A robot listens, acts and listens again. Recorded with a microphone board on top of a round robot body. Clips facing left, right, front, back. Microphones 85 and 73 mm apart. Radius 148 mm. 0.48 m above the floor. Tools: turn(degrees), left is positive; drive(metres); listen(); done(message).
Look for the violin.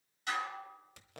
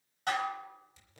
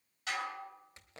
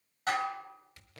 listen()
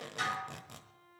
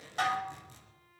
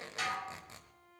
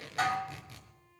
turn(degrees=30)
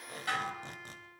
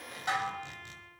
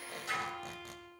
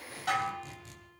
done("Facing the violin, under 1 m away.")